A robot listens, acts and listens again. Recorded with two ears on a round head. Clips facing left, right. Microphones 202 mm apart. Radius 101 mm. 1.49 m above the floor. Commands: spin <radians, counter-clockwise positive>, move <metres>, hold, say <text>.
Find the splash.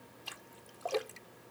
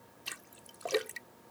spin -0.52
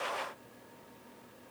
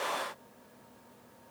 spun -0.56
hold
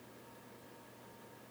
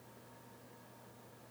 say I heard a splash, but can't make it out now. It was about straight ahead or 115° right.